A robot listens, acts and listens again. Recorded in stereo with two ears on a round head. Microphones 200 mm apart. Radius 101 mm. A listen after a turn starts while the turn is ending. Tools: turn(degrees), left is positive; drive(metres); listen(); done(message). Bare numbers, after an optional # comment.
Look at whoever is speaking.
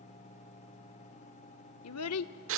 turn(90)
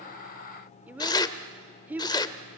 # So it is at 10° right.
turn(-10)
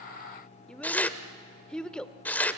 done("Found it: a child speaking, straight ahead.")